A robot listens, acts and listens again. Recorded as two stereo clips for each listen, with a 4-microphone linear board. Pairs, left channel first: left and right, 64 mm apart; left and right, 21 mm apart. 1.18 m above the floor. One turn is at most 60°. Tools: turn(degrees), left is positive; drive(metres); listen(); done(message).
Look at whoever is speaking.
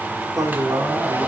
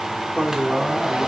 turn(degrees=-60)
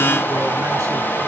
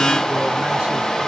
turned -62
listen()
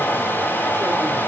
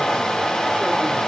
listen()
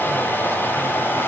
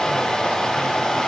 done("I heard a man speaking, but can't make it out now. It was about straight ahead or 60° right.")